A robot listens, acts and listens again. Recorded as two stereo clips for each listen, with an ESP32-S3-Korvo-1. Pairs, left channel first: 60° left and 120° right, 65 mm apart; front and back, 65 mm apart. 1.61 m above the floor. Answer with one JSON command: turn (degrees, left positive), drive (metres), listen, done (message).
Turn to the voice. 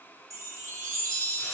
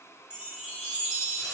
{"listen": true}
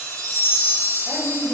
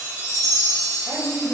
{"turn": -160}
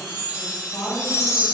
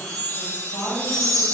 {"turn": 40}
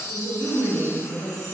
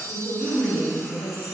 {"turn": 20}
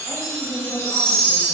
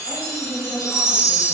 {"done": "Facing the woman speaking."}